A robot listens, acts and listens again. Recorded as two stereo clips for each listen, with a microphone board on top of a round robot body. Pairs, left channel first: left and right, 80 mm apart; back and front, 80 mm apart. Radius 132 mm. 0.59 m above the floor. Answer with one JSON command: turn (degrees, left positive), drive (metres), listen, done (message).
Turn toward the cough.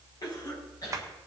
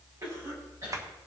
{"turn": 50}
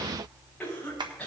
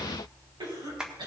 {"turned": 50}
{"turn": 15}
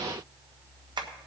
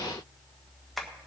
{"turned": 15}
{"listen": true}
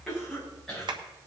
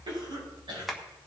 {"done": "Facing the cough, over 4 m away."}